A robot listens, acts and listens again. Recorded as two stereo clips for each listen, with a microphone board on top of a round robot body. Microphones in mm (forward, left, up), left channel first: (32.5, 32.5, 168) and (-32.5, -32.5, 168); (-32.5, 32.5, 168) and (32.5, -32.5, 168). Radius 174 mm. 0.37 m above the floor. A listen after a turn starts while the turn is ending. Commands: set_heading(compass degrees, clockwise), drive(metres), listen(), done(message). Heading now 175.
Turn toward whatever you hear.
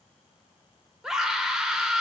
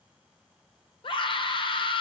set_heading(35)
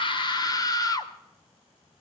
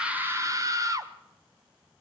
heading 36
done("Facing the scream.")